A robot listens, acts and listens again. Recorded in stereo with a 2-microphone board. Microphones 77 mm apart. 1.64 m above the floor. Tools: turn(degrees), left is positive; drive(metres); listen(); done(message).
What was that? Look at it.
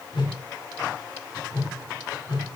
turn(degrees=75)
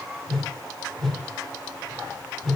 done("Found it: a whoosh, straight ahead.")